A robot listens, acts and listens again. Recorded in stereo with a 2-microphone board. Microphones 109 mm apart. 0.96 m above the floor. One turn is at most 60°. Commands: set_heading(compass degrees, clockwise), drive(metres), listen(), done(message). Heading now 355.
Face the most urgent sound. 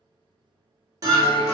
set_heading(50)
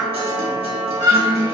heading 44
set_heading(99)
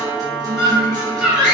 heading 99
done("Found it: a scream, straight ahead.")